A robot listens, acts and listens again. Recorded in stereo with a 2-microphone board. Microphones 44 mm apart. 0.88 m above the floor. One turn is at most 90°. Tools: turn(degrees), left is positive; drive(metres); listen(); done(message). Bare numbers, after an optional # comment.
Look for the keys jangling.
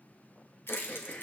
# The keys jangling: about 70° left or 110° left.
turn(70)
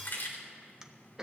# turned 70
# So it is at 50° left.
turn(50)
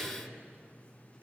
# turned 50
listen()
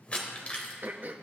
# The keys jangling is now 30° left.
turn(30)
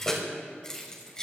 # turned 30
# The keys jangling is now 15° left.
turn(15)
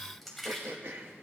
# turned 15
done("Found it: keys jangling, straight ahead.")